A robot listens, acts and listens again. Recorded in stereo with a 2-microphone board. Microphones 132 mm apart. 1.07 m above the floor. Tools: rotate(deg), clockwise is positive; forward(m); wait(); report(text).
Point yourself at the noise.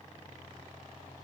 wait()
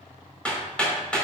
rotate(-30)
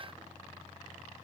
wait()
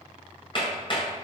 rotate(-140)
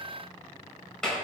report("Found it: hammering, straight ahead, over 4 m away.")